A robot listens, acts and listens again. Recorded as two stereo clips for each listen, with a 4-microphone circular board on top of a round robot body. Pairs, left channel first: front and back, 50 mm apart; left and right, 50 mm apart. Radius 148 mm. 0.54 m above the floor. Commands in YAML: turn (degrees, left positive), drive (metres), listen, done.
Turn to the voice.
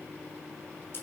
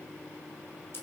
listen: true
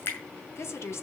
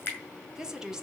turn: -15
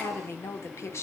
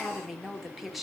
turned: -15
done: "Found it: a woman speaking, straight ahead."